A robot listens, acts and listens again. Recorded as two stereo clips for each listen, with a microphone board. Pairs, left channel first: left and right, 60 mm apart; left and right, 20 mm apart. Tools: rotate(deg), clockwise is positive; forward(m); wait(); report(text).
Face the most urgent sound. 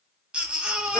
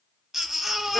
rotate(15)
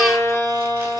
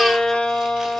wait()
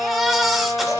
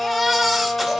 report("Facing the baby crying, under 1 m away.")